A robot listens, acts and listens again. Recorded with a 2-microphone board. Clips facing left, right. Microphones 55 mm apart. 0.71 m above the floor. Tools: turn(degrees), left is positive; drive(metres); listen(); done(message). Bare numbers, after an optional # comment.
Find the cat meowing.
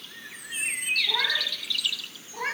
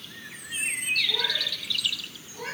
# The cat meowing: about 50° left or 130° left.
turn(50)
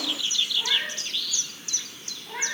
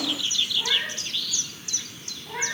done("Found it: a cat meowing, straight ahead.")